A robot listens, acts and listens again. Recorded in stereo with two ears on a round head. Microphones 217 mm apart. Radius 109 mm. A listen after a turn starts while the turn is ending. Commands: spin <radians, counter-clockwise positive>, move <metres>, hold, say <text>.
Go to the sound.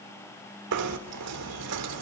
spin -1.57
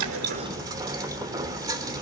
spin -0.26
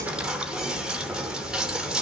move 1.0
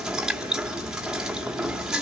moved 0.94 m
move 1.0
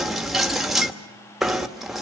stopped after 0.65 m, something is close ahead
say I am next to the knocking.